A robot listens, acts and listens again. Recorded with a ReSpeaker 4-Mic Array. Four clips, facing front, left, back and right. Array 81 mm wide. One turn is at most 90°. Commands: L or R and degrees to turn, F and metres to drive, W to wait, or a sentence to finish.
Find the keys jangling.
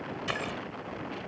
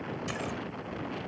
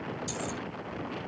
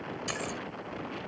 Facing the keys jangling.